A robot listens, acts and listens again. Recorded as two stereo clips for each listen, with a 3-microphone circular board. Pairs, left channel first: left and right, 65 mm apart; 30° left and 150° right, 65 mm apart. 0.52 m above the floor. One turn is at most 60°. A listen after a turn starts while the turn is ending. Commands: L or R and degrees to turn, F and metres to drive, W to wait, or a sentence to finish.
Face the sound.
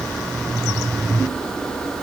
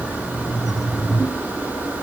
W
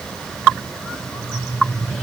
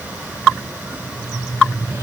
W
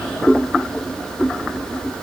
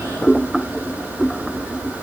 I can't make out anything.